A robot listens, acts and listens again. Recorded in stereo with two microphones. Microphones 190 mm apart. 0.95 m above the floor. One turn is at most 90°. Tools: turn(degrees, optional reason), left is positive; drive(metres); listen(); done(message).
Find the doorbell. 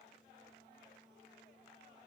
listen()
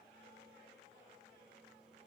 listen()
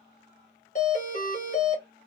turn(degrees=45, reason="The doorbell: about 45° left or 135° left.")
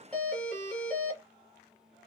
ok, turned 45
done("Found it: a doorbell, straight ahead, 1 to 2 m away.")